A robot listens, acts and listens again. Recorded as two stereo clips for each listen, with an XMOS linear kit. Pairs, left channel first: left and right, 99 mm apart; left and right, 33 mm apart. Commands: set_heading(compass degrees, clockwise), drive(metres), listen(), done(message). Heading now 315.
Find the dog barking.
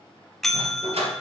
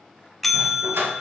set_heading(45)
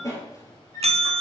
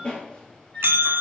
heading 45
set_heading(10)
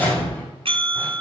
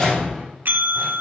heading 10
set_heading(350)
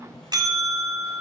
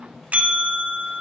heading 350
listen()
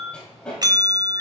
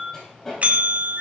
set_heading(340)
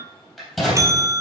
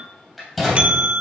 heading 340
done("Facing the dog barking, 2 to 4 m away.")